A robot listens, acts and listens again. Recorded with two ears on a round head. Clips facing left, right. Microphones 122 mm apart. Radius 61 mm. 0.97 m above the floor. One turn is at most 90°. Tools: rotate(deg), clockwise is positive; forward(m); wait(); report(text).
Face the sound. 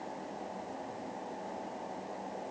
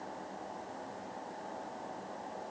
wait()
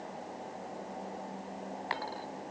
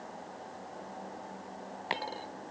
rotate(25)
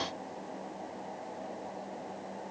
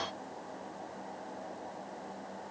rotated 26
wait()
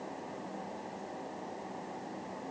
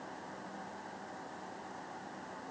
report("I heard a dropped coin, but can't make it out now. It was about straight ahead or 130° right.")